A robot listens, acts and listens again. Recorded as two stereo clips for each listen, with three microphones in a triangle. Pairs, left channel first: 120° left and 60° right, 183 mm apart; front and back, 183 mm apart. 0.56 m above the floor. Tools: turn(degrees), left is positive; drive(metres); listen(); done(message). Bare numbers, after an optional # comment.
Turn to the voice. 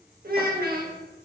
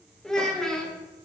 # The child speaking: 85° right.
turn(-85)
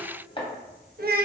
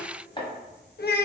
# The child speaking is now 25° right.
turn(-25)
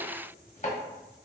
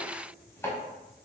listen()
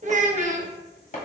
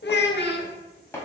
# The child speaking is now 10° right.
turn(-10)
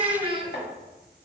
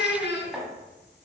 done("Facing the child speaking, under 1 m away.")